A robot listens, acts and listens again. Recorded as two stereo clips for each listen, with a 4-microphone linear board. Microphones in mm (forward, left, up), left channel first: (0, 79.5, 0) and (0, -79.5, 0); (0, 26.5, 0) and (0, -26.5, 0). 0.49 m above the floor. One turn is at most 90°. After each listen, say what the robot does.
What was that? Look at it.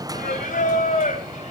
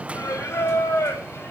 Turn 55° left.
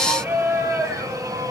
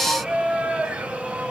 Turn 20° right.
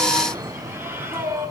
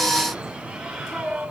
Turn 15° right.
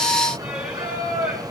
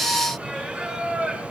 Turn 10° right.
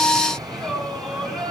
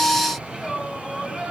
Facing the singing, over 4 m away.